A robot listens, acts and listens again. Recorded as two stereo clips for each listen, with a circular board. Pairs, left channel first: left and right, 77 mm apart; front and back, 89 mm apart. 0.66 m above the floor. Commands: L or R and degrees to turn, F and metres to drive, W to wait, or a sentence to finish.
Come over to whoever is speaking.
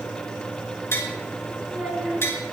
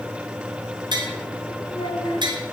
R20
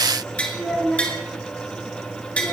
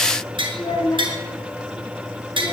F1.0
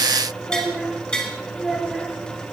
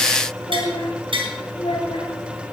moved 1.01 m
F1.0
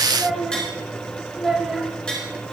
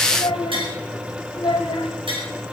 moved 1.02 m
R10
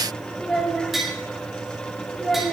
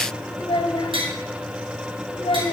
F1.0
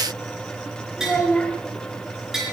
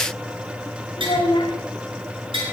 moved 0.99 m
L10
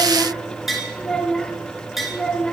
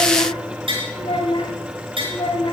F1.0
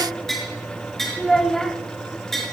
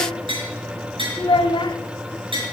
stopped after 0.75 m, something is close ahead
Arrived at the child speaking, straight ahead.